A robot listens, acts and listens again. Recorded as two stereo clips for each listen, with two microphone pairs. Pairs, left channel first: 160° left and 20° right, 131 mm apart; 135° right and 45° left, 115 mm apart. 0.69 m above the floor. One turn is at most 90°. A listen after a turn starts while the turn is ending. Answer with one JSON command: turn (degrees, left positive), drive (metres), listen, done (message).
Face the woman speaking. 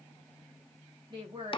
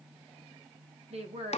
{"turn": 30}
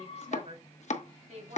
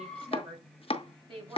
{"done": "Found it: a woman speaking, straight ahead, over 4 m away."}